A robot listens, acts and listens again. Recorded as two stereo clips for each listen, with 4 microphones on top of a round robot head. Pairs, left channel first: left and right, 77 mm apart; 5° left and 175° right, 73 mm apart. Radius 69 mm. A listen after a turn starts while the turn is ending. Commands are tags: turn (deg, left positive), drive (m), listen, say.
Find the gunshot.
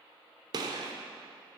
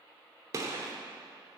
<turn deg="-125"/>
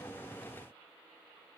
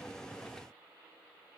<say>Facing where the gunshot came from. I can't hear it now.</say>